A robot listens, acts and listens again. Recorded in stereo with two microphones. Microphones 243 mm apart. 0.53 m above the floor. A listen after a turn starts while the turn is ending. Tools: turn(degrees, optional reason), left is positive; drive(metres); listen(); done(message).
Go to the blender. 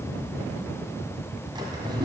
listen()
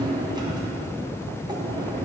listen()
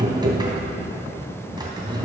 done("I can't make out a blender, only a drawer.")